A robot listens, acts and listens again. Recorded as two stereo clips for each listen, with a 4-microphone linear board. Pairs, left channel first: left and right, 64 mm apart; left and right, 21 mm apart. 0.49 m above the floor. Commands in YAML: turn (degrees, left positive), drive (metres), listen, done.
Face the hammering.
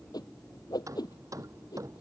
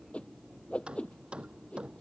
turn: -55
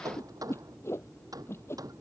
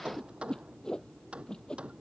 turn: -70
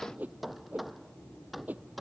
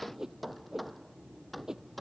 done: "Found it: hammering, straight ahead."